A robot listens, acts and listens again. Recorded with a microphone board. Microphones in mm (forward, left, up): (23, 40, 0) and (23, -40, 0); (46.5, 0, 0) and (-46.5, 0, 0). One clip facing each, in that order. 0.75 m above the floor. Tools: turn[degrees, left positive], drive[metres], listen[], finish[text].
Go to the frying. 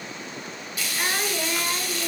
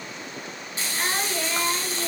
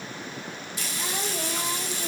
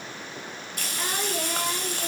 Thought: The frying: 150° right.
Action: turn[-150]
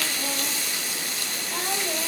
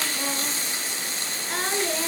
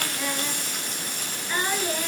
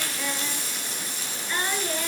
Thought: The frying is now 30° right.
Action: turn[-30]
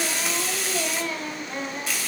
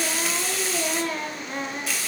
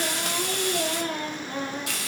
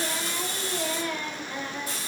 Action: drive[1.0]
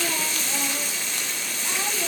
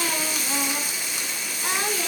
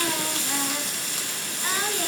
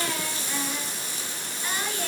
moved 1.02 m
Thought: The frying is now 10° right.
Action: turn[-10]
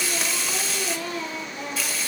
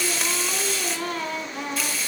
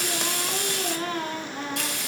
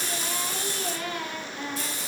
Action: drive[1.0]
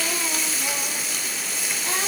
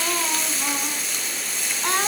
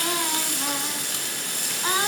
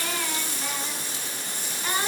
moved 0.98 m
Action: drive[1.0]
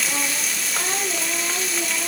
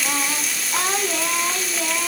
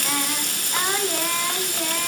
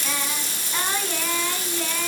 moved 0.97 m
Action: drive[1.0]
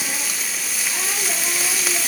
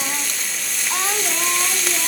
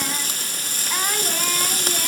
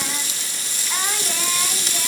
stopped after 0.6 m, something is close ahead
Action: finish[Arrived at the frying, straight ahead.]